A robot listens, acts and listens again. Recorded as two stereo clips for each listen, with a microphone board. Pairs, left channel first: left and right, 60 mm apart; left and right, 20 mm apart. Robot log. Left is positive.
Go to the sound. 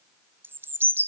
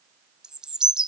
note: The bird: about 40° right or 140° right.
cmd yaw -40
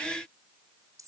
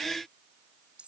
cmd idle
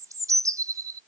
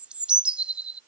note: So it is at 100° right.
cmd yaw -100
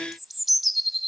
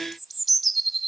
cmd fwd 1.0
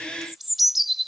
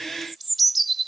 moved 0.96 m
cmd fwd 1.0
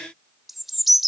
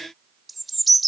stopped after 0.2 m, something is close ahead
end: I am next to the bird.